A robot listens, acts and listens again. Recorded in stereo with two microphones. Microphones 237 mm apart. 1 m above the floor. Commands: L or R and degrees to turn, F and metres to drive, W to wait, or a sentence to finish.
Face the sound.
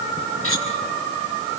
L65
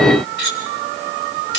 L50
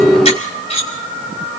L25
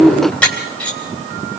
Facing the cutlery clinking.